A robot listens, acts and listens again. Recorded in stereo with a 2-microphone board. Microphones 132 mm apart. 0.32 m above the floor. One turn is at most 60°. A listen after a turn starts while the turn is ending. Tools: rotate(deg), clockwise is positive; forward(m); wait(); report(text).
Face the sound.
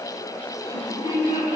rotate(25)
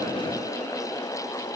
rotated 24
wait()
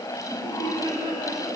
rotate(35)
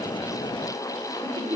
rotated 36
rotate(60)
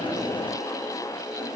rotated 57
rotate(60)
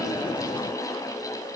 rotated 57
wait()
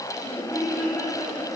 report("Facing the laughter, over 4 m away.")